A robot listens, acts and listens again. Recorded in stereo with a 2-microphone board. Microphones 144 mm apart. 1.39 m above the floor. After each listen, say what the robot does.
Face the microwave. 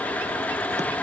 Keep listening.
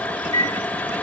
Turn 30° left.
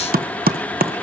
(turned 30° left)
Keep listening.
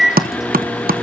Found it: a microwave, straight ahead, 2 to 4 m away.